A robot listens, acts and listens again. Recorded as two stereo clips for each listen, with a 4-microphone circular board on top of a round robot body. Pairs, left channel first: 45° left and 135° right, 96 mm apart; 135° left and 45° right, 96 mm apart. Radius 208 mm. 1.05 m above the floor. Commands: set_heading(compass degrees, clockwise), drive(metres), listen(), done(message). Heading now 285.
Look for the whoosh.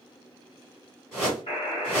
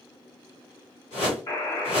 set_heading(150)
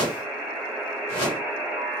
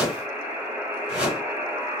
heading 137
set_heading(152)
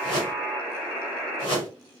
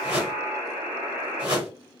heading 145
done("Facing the whoosh.")